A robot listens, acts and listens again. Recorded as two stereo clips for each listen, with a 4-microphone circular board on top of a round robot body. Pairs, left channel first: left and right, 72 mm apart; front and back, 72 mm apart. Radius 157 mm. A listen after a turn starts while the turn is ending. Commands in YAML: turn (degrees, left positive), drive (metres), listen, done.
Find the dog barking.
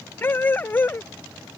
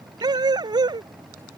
turn: 155
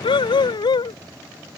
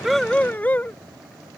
turn: 70
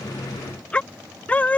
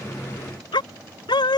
turn: 20
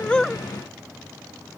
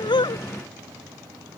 listen: true
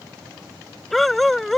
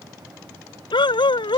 done: "Facing the dog barking."